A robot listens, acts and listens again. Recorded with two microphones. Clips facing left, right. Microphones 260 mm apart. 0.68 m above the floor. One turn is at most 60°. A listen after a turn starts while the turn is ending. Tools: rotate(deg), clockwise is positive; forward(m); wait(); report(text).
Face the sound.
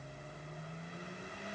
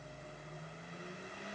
wait()
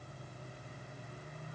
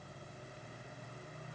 wait()
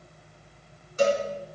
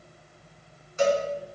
rotate(-35)
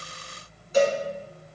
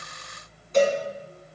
report("Found it: a cowbell, straight ahead, 2 to 4 m away.")